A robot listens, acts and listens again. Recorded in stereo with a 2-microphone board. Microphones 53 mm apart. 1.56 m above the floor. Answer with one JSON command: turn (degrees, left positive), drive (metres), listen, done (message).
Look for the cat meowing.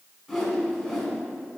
{"listen": true}
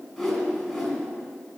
{"listen": true}
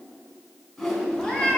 {"turn": 30}
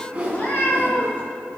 {"turn": 150}
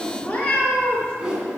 {"turn": 20}
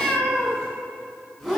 {"done": "Facing the cat meowing, 2 to 4 m away."}